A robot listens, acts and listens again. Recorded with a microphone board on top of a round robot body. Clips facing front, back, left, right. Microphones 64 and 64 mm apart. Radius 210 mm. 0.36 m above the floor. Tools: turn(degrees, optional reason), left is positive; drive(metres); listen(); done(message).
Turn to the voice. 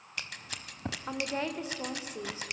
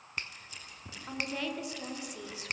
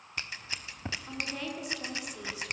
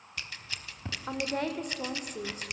turn(degrees=-55, reason="The woman speaking: 55° right.")
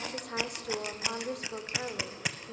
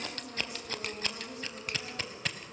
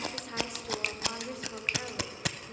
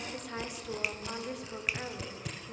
done("Found it: a woman speaking, straight ahead, 2 to 4 m away.")